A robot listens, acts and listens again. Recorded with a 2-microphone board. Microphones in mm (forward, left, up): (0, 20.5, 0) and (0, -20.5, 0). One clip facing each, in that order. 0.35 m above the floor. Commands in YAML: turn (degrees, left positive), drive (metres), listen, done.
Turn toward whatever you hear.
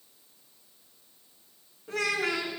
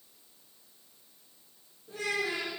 turn: 75
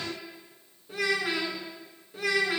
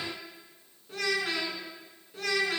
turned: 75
turn: 10
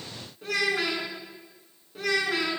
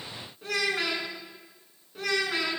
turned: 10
done: "Found it: a child speaking, straight ahead."